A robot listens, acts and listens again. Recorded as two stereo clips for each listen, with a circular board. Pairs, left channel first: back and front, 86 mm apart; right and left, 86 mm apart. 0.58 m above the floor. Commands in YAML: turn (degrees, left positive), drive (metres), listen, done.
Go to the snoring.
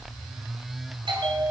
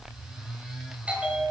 listen: true
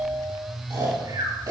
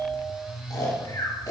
turn: -40
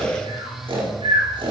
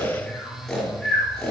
drive: 1.0
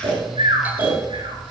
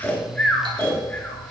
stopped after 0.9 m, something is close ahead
turn: -10
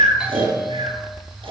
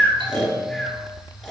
done: "Something is in my way. I am facing the snoring but have not reached it."